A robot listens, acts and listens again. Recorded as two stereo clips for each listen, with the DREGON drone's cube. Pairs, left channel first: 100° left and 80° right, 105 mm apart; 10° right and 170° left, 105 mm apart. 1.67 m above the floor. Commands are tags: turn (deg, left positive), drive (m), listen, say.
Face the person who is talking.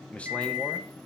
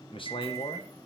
<turn deg="20"/>
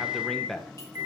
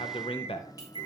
<turn deg="15"/>
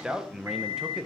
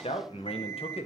<say>Found it: a man speaking, straight ahead, 1 to 2 m away.</say>